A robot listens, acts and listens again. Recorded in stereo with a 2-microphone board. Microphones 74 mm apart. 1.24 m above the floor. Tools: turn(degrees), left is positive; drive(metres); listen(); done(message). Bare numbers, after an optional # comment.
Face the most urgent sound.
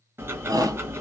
# The shout: about 55° right or 125° right.
turn(-55)
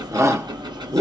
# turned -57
# So it is at 50° right.
turn(-50)
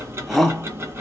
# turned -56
done("Found it: a shout, straight ahead, under 1 m away.")